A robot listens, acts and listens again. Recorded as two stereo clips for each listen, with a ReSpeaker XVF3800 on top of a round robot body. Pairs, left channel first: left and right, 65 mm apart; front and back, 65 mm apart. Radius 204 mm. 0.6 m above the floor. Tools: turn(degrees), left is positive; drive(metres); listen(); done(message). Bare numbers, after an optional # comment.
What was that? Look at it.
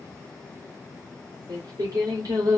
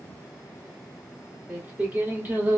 # The singing: 115° right.
turn(-115)
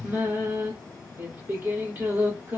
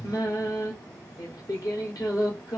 # The singing is now 30° right.
turn(-30)
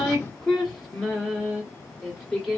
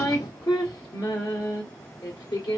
done("Facing the singing.")